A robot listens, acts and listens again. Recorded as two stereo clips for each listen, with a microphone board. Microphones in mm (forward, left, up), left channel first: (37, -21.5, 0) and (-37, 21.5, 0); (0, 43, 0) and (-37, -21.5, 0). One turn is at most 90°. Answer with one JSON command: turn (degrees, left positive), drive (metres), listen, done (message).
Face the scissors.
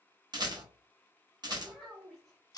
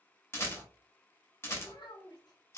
{"turn": 15}
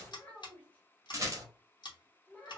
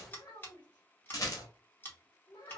{"done": "Facing the scissors."}